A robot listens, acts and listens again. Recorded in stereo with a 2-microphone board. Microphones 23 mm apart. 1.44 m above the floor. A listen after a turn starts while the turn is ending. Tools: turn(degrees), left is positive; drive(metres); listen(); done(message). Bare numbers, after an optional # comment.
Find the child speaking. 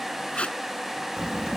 turn(-90)
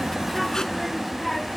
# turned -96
done("Found it: a child speaking, straight ahead.")